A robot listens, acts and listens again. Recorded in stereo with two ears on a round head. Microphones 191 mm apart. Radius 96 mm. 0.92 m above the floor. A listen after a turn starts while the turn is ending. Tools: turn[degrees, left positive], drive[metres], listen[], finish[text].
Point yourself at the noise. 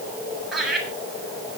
Action: turn[30]
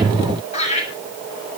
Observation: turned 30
Thought: So it is at 145° left.
Action: turn[145]
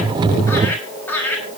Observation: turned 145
Thought: The laughter is now 10° left.
Action: turn[10]
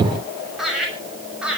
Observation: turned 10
Action: finish[Found it: laughter, straight ahead.]